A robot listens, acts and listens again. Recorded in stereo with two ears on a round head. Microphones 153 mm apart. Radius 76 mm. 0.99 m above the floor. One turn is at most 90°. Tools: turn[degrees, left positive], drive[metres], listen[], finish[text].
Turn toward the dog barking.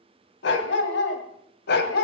Thought: The dog barking: about 60° left or 120° left.
Action: turn[60]
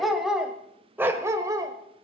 Thought: So it is at 25° right.
Action: turn[-25]
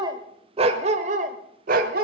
Thought: The dog barking is now 55° right.
Action: turn[-55]
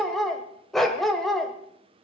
Action: finish[Facing the dog barking.]